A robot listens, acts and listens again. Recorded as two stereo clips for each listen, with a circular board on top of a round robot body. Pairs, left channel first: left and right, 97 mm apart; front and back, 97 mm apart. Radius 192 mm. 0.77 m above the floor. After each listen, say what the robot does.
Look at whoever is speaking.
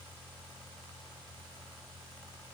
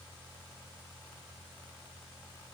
Keep listening.
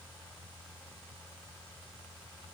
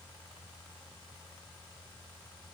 Keep listening.
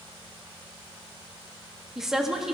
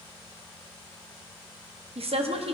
Turn 175° right.
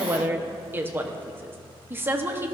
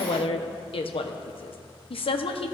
Turn 20° right.
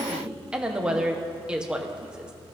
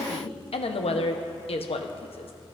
Turn 10° right.
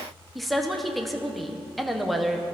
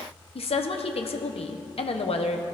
Found it: a woman speaking, straight ahead.